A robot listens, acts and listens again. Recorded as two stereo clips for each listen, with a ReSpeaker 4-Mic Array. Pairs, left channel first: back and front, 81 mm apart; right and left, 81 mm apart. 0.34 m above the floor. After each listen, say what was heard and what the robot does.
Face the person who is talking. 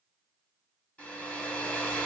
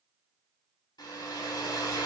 Keep listening.
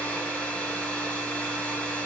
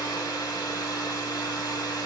Keep listening.
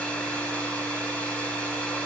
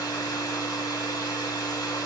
I can't make out anyone speaking to turn to.